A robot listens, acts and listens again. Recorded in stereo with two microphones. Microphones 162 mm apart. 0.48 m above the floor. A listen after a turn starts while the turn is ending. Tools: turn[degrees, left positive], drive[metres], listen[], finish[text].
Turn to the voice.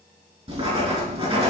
Action: listen[]
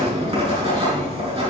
Action: listen[]
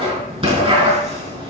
Action: finish[I can't make out anyone speaking, only writing.]